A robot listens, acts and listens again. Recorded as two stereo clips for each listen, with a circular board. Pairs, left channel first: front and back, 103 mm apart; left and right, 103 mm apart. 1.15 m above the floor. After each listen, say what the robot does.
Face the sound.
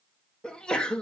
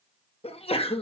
Turn 80° left.
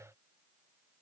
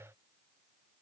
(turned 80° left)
Facing where the sneeze came from. I can't hear it now.